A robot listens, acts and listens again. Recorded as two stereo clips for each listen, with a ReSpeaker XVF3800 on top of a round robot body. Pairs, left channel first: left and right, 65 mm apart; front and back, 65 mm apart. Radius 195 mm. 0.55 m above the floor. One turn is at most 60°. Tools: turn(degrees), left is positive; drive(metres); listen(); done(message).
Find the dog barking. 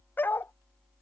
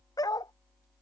turn(degrees=30)
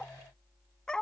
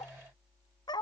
turn(degrees=10)
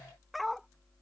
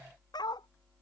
done("Facing the dog barking.")